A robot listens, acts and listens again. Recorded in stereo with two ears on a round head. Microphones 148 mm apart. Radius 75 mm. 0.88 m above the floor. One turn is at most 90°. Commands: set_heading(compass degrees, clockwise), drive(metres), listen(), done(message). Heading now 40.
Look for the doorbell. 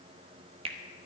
listen()
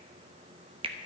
listen()
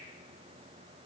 done("I can't make out a doorbell, only a finger snap.")